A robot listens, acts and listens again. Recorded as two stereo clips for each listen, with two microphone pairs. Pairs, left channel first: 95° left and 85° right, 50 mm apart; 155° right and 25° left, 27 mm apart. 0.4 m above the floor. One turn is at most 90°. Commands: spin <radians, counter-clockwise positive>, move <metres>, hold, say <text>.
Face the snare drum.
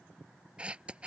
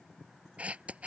hold
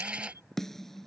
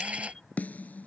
spin 1.57
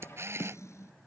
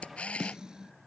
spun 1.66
spin 1.48
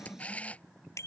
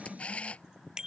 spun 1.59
say Facing the snare drum.